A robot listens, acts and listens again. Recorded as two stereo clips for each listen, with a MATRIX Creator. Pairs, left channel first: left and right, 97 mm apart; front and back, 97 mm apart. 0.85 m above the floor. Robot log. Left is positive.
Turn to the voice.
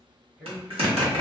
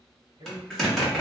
note: The man speaking: 160° right.
cmd yaw -160
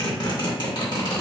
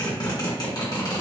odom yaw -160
cmd idle
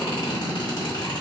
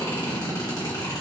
cmd idle
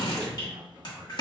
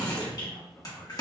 note: The man speaking is now 25° right.
cmd yaw -25
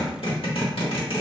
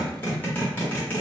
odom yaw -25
cmd idle
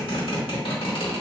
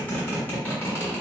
cmd idle
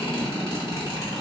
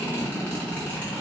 end: I heard a man speaking from this way, but can't make it out now.